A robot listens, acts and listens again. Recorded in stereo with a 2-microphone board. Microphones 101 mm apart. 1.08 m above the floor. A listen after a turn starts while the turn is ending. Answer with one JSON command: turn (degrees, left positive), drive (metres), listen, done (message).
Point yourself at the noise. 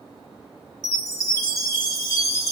{"turn": 35}
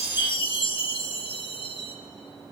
{"turn": 100}
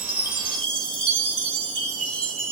{"turn": 10}
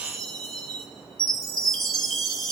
{"done": "Found it: a chime, straight ahead."}